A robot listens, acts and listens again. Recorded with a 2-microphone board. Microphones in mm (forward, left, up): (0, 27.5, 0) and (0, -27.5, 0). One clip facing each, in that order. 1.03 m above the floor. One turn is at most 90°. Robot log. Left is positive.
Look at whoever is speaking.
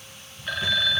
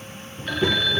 note: The child speaking: about 45° right or 135° right.
cmd yaw -45
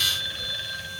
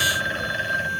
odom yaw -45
cmd idle
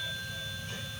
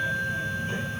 note: So it is at 30° right.
cmd yaw -30
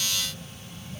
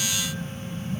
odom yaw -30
end: Found it: a child speaking, straight ahead.